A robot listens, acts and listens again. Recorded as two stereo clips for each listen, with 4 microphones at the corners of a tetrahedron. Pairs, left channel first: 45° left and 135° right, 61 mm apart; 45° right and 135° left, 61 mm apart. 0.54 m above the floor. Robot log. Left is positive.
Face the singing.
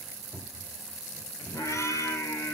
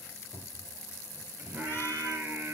note: The singing: 70° left.
cmd yaw +70
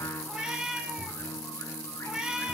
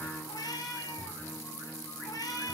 end: Facing the singing, 2 to 4 m away.